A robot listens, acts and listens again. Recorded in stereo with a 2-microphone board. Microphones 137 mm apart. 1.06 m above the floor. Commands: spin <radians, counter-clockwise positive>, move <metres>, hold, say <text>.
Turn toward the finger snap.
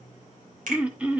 spin -1.31
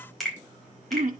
say Found it: a finger snap, straight ahead.